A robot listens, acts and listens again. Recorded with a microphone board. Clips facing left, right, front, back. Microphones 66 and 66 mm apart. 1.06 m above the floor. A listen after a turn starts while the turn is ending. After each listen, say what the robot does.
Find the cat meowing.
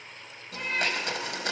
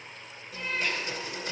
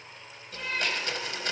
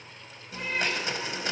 Turn 150° left.
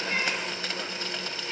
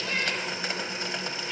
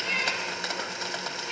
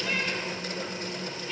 Keep listening.
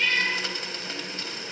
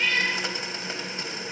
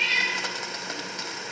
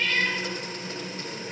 Turn 60° left.
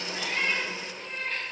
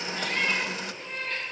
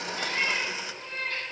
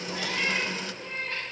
Turn 10° left.
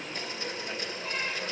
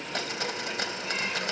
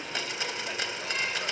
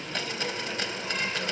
Keep listening.
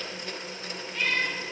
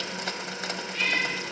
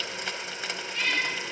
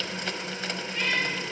Facing the cat meowing, over 4 m away.